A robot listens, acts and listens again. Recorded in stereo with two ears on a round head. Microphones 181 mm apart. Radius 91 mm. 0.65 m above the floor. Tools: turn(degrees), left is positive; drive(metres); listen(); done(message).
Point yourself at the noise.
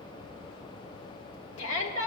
turn(degrees=70)
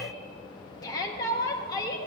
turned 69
turn(degrees=20)
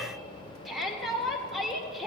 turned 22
done("Found it: a shout, straight ahead, 1 to 2 m away.")